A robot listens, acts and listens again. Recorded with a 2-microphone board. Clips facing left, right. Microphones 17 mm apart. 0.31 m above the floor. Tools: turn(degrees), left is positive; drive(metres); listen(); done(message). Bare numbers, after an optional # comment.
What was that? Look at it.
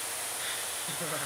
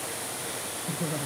# The laughter: about 30° left or 150° left.
turn(30)
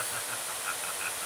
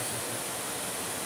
listen()
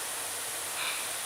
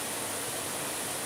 # So it is at 125° left.
turn(125)
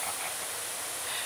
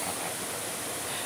listen()
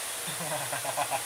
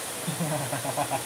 # The laughter is now 10° left.
turn(10)
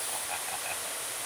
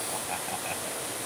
listen()
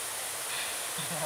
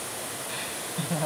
done("Facing the laughter.")